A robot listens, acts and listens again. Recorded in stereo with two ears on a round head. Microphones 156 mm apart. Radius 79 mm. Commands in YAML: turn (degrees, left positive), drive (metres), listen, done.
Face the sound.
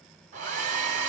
turn: -45
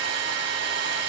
turn: -85
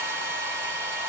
turn: -15
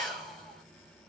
done: "Facing the hair dryer."